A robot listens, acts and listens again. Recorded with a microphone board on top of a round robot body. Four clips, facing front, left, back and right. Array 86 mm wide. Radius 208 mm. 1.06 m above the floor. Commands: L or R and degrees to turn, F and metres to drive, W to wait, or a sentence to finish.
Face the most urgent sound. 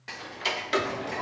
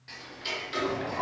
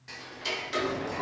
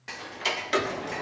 L90
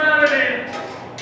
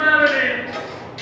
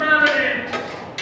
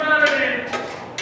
L10
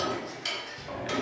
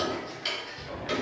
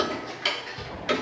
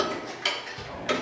W
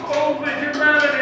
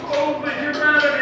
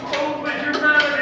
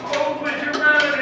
Found it: a shout, straight ahead, 2 to 4 m away.